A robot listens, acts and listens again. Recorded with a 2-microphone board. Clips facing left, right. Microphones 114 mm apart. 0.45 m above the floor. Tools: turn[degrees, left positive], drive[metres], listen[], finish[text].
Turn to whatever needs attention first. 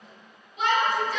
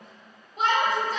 Thought: The shout: about 40° right or 140° right.
Action: turn[-40]
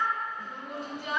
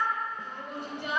Thought: So it is at 90° right.
Action: turn[-90]
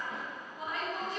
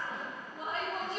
Thought: The shout is now 35° right.
Action: turn[-35]
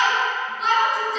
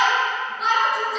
Action: finish[Found it: a shout, straight ahead.]